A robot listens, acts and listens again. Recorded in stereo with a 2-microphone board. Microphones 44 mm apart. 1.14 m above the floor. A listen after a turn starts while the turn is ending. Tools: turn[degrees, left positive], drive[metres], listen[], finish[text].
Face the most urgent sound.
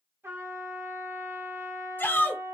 Thought: The shout: about 50° left or 130° left.
Action: turn[50]
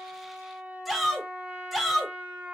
Action: finish[Facing the shout, under 1 m away.]